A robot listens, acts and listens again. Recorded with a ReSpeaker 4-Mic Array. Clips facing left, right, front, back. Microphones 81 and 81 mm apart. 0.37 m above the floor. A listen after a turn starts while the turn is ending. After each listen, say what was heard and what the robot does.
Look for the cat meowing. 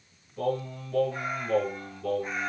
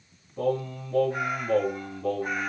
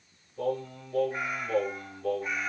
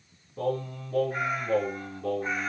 The cat meowing: 125° right. Turn 125° right.
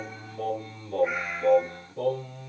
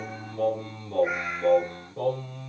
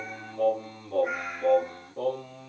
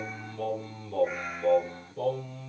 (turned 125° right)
The cat meowing is now 25° right. Turn 25° right.
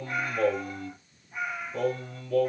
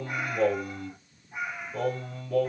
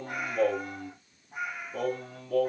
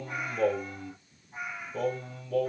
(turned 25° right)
The cat meowing is now 20° right. Turn 20° right.
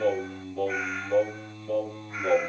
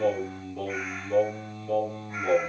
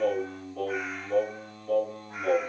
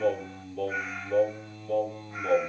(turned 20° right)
Keep listening.
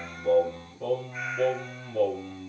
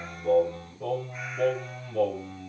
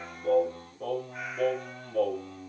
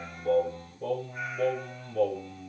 Keep listening.
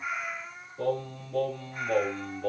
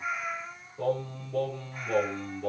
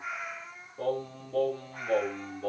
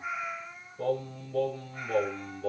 Found it: a cat meowing, straight ahead.